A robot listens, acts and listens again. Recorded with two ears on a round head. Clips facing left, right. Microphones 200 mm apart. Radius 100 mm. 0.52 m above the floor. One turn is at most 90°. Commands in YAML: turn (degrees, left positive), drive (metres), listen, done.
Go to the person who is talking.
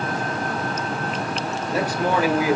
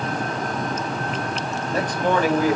turn: 30
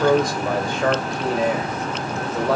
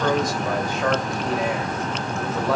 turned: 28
turn: 90
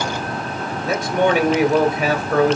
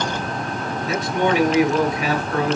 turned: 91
turn: 50
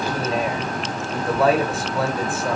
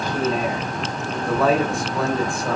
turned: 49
drive: 1.0
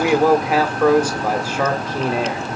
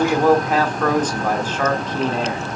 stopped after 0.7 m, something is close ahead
turn: 15
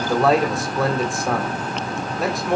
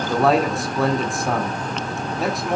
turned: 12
done: "Arrived at the man speaking, straight ahead."